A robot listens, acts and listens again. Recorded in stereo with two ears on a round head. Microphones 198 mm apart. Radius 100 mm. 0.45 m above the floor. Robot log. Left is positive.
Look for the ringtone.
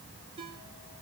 note: The ringtone: about 25° right or 155° right.
cmd yaw -25
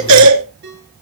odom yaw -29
note: So it is at 125° right.
cmd yaw -125
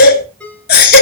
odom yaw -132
end: Facing the ringtone.